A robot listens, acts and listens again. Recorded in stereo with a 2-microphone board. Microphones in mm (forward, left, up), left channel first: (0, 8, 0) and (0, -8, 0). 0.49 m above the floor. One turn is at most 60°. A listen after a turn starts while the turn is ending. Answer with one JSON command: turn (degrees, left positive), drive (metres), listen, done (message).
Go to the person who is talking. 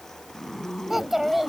{"turn": -30}
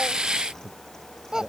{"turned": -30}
{"turn": -60}
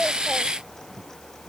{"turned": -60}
{"turn": -60}
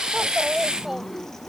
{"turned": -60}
{"turn": -15}
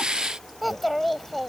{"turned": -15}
{"drive": 1.0}
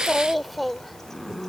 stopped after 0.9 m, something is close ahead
{"done": "I am next to the child speaking."}